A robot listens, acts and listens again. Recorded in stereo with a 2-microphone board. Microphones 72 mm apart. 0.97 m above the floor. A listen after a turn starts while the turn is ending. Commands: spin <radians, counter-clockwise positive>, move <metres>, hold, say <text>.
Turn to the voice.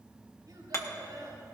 spin -1.22
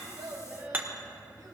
spin -0.87
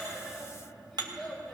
spin 0.17
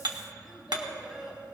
spin -0.26
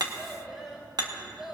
say Facing the child speaking, 2 to 4 m away.